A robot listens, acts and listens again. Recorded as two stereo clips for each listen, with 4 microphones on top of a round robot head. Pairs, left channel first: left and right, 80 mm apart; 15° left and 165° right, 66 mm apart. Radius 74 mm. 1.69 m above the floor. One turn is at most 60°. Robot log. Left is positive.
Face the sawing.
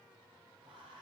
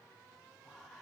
cmd idle
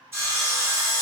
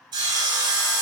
note: The sawing: 155° right.
cmd yaw -60
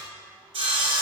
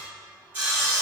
note: The sawing is now 95° right.
cmd yaw -60
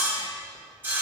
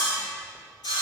note: The sawing is now 25° right.
cmd yaw -25
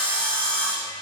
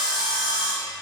note: The sawing is now 10° left.
cmd yaw +10
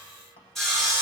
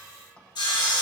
end: Found it: sawing, straight ahead.